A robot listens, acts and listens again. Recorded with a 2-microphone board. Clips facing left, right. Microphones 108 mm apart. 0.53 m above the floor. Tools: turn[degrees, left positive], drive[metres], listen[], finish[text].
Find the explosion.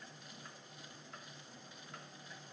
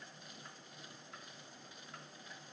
Action: listen[]
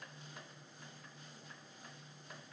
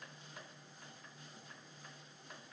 Action: listen[]
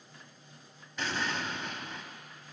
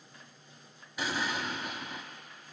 Action: turn[-30]
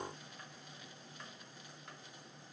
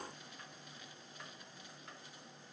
Action: listen[]
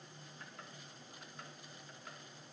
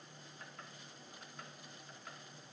Action: finish[I heard an explosion, but can't make it out now. It was about 20° left or 140° right.]